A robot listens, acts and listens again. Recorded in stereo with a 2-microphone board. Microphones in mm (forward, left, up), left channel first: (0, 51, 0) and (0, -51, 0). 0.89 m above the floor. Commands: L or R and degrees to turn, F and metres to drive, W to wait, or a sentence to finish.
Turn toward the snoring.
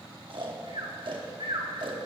R55
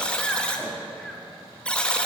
Found it: snoring, straight ahead.